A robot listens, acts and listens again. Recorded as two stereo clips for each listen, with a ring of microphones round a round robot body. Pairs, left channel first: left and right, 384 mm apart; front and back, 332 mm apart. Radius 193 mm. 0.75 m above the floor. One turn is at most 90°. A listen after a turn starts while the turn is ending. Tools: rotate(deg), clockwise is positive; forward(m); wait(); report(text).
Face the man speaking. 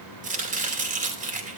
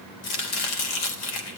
wait()
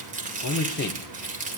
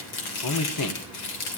rotate(-25)
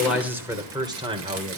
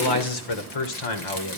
rotate(15)
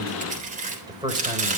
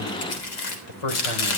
rotate(10)
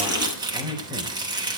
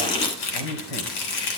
rotate(10)
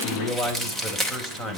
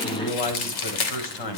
report("Facing the man speaking.")